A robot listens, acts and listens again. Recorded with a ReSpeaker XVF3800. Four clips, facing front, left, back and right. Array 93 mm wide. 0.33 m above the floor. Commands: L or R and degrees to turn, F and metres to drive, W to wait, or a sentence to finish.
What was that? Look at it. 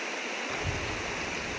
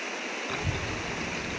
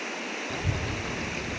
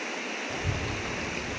L75
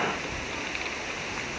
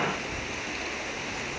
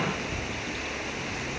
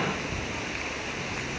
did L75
R30
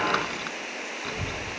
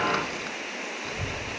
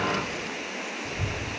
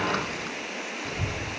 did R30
Facing the child speaking, 2 to 4 m away.